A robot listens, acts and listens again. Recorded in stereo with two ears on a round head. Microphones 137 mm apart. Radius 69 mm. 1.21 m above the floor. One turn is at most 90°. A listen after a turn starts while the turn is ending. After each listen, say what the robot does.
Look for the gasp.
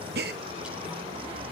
Turn 70° right.
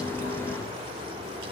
Keep listening.
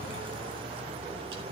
I heard a gasp, but can't make it out now. It was about straight ahead or 40° right.